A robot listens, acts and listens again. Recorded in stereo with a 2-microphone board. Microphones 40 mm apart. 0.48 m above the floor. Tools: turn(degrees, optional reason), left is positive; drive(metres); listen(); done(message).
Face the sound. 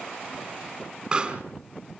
turn(degrees=-20, reason="The pop: about 20° right or 160° right.")
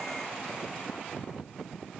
listen()
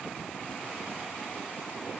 done("I heard a pop, but can't make it out now. It was about straight ahead or 140° right.")